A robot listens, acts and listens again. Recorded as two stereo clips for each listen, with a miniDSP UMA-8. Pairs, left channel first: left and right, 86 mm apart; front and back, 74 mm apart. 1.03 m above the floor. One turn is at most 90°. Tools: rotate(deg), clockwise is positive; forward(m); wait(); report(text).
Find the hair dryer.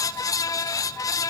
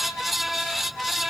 wait()
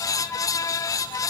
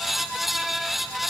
wait()
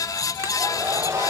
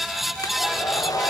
rotate(35)
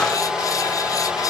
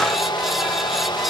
rotate(10)
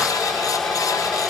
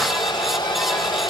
report("Facing the hair dryer, 2 to 4 m away.")